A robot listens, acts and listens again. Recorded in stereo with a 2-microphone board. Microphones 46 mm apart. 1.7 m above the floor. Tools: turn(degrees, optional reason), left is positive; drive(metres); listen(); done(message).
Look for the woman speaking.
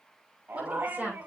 turn(degrees=-30, reason="The woman speaking: about 30° right or 150° right.")
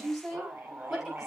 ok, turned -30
done("Facing the woman speaking.")